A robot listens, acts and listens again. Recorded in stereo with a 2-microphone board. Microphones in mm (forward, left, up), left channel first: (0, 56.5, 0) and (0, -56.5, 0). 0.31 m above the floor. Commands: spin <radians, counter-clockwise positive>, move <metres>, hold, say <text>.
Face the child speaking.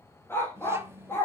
spin -0.44
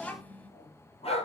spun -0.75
spin 0.26
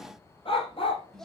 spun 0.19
say Facing the child speaking.